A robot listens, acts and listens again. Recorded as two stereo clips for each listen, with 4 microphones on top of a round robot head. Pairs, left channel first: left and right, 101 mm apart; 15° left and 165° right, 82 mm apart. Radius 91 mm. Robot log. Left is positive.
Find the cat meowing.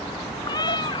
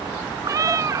note: The cat meowing: 140° left.
cmd yaw +140
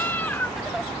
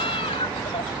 note: The cat meowing is now 15° left.
cmd yaw +15
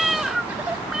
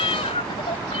end: Found it: a cat meowing, straight ahead.